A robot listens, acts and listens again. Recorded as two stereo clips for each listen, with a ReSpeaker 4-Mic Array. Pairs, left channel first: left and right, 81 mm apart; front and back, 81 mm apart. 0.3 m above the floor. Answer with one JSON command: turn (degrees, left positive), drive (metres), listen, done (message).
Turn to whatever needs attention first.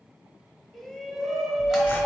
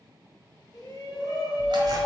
{"done": "Facing the shout."}